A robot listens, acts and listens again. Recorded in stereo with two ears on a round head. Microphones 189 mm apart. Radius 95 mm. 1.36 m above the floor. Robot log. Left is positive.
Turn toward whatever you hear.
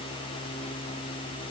cmd idle
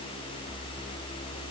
cmd idle
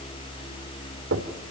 note: The knocking: about 60° right or 120° right.
cmd yaw -60
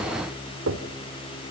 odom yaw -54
note: So it is at 65° right.
cmd yaw -65
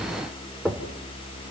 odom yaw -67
end: Facing the knocking, 2 to 4 m away.